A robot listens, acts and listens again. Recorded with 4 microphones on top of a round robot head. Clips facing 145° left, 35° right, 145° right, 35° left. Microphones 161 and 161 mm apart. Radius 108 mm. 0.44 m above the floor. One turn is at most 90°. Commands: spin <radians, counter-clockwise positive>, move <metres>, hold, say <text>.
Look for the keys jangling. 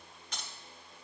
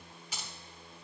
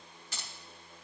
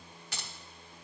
spin 0.79
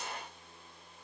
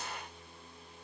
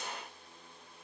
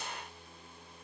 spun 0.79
hold
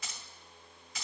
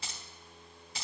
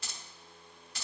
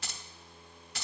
spin 0.35
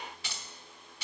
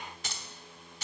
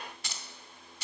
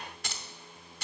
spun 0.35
say Facing the keys jangling.